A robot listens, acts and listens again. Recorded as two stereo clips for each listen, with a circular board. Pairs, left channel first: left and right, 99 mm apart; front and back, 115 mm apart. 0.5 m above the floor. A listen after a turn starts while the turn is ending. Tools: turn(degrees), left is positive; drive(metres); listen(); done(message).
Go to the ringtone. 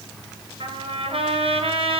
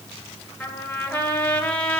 listen()
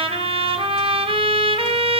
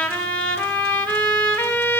listen()
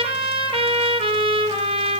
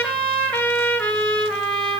done("I can't make out a ringtone to turn to.")